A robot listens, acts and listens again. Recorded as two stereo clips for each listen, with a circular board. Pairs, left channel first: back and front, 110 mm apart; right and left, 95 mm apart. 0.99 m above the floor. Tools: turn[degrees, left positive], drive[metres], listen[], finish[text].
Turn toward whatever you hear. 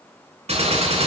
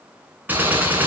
Thought: The gunshot: 20° left.
Action: turn[20]
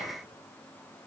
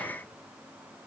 Action: finish[Facing where the gunshot came from. I can't hear it now.]